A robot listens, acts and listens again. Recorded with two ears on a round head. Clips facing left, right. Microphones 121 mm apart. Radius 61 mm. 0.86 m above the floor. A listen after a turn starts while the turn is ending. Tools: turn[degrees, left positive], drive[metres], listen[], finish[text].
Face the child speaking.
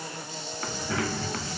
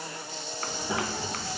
Thought: The child speaking: about 20° right or 160° right.
Action: turn[-20]
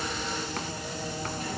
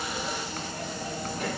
Thought: So it is at 125° right.
Action: turn[-125]
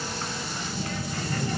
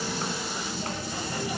Thought: The child speaking is now 10° right.
Action: turn[-10]
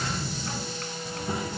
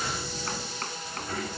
Thought: The child speaking is now 15° left.
Action: turn[15]
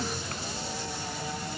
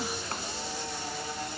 Action: finish[Facing the child speaking.]